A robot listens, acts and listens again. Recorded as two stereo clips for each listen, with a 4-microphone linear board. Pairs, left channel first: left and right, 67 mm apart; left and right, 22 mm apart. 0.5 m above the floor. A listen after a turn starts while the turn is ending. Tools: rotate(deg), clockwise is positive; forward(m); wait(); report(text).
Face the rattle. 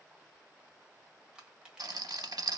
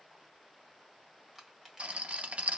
rotate(75)
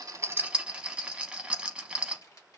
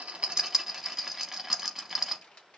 rotate(20)
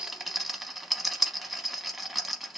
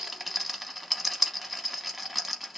report("Found it: a rattle, straight ahead.")